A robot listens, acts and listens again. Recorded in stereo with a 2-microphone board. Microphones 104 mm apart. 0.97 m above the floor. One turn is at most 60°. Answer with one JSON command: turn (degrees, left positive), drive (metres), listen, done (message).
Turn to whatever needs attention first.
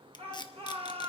{"turn": -60}
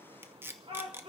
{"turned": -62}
{"turn": -60}
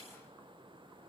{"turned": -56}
{"listen": true}
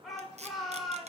{"done": "Found it: a shout, straight ahead, 2 to 4 m away."}